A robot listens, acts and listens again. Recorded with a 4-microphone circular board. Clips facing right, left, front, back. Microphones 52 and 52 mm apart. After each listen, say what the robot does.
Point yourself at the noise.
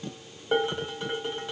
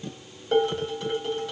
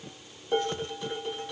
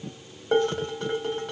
Turn 160° right.
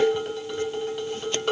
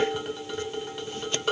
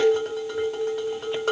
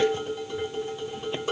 Found it: dishes clattering, straight ahead.